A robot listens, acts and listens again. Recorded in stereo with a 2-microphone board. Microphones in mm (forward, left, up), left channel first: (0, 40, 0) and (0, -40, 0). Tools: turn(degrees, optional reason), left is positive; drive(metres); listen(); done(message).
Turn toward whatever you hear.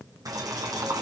turn(degrees=-50, reason="The boiling: about 50° right or 130° right.")
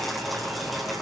done("Facing the boiling, 2 to 4 m away.")